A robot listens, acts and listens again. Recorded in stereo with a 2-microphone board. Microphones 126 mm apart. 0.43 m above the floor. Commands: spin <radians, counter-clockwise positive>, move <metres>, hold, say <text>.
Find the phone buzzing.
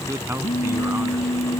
spin 1.22
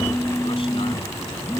say Found it: a phone buzzing, straight ahead.